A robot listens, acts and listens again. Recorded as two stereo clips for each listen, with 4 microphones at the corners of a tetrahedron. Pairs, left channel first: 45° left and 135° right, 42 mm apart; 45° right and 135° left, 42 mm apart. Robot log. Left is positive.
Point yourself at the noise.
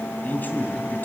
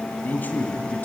end: Found it: a man speaking, straight ahead.